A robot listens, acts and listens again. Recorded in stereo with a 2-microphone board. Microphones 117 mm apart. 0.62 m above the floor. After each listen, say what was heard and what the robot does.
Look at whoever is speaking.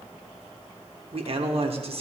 The man speaking: about 55° right or 125° right. Turn 55° right.
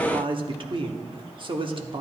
So it is at 55° right. Turn 55° right.
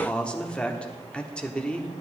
The man speaking is now 10° left. Turn 10° left.
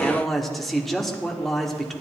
Facing the man speaking.